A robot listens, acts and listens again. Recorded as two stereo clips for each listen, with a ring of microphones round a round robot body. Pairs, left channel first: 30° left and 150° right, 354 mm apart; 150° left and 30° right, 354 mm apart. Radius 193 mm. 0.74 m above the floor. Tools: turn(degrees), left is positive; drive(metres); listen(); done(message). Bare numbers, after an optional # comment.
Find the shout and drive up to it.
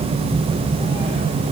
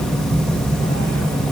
listen()
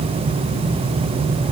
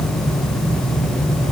listen()
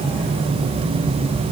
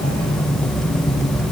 done("I can't make out a shout to turn to.")